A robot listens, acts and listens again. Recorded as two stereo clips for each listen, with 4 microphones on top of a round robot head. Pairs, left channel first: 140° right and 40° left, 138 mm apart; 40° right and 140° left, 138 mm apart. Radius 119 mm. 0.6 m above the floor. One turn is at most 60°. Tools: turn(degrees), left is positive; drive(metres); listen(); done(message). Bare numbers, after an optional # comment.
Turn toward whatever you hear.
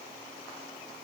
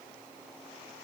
listen()
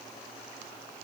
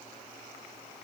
listen()
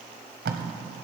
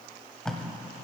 # The tape being pulled: 45° left.
turn(45)
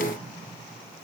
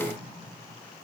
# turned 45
listen()
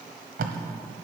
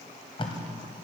# The tape being pulled is now 15° left.
turn(15)
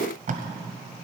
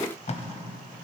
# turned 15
done("Found it: tape being pulled, straight ahead, 1 to 2 m away.")